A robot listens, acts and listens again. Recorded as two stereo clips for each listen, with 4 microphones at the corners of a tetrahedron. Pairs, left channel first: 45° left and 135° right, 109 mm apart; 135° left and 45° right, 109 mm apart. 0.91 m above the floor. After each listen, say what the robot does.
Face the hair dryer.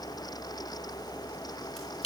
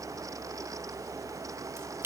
Keep listening.
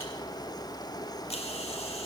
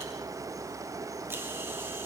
Keep listening.
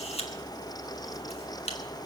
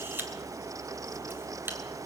I can't make out a hair dryer, only a camera shutter.